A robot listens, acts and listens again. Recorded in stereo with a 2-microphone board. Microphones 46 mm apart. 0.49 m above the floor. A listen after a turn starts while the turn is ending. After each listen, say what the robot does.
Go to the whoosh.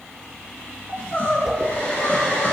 Turn 30° right.
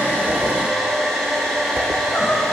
Turn 135° right.
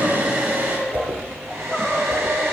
Turn 45° right.
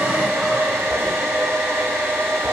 Keep listening.
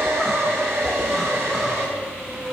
Turn 30° right.
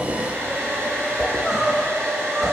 Turn 15° right.
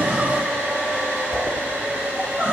Drive 1.0 m forward.
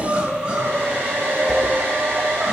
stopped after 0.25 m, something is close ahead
Keep listening.
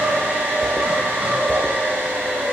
Blocked. The whoosh is further on, straight ahead.